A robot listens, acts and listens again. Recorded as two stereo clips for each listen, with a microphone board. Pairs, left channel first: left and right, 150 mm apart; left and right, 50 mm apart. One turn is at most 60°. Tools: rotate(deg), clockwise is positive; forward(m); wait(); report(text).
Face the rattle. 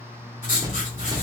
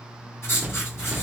rotate(25)
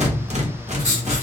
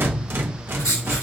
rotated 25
rotate(60)
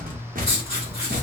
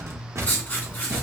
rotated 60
rotate(60)
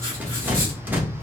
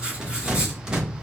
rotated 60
rotate(10)
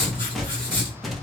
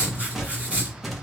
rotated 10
report("Found it: a rattle, straight ahead, 1 to 2 m away.")